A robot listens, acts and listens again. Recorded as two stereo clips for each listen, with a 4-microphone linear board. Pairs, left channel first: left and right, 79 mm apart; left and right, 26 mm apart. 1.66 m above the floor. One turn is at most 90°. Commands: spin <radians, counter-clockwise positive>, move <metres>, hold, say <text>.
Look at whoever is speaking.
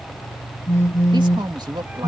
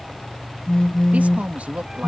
spin -1.22
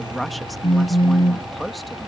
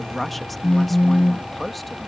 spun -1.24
say Found it: a woman speaking, straight ahead.